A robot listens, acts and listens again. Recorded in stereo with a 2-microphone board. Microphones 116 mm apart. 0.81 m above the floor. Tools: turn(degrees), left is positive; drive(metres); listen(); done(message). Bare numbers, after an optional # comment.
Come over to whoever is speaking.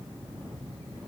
listen()
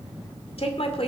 # The woman speaking: about 60° left or 120° left.
turn(60)
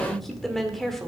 drive(1.0)
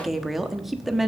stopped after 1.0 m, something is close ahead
done("I am next to the woman speaking.")